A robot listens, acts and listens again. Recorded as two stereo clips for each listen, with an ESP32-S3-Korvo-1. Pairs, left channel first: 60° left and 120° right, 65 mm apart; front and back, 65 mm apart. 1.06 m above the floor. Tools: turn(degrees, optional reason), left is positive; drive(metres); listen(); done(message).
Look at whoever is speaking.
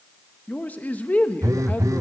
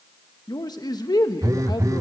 done("Facing the man speaking, 1 to 2 m away.")